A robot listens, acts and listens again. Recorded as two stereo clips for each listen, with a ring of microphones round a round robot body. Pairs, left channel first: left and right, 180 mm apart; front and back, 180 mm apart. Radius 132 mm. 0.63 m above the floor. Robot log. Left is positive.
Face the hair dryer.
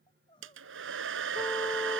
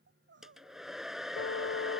note: The hair dryer: 90° right.
cmd yaw -90
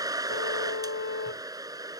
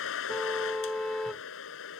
note: The hair dryer is now 20° right.
cmd yaw -20
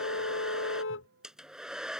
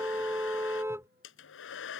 end: Found it: a hair dryer, straight ahead.